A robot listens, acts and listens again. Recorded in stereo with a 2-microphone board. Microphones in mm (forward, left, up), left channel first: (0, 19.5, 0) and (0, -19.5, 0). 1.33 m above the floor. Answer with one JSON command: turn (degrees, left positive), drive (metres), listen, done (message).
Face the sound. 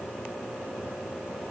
{"listen": true}
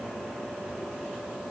{"listen": true}
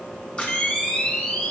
{"turn": 30}
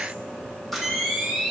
{"done": "Found it: a camera shutter, straight ahead."}